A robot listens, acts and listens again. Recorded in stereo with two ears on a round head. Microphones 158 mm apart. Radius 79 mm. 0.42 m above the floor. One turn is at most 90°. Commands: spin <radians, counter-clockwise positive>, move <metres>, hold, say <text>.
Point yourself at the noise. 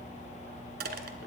spin -1.05
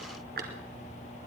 spin -0.96
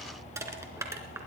spin -0.26
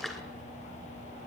hold
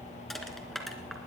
say Facing the crushing.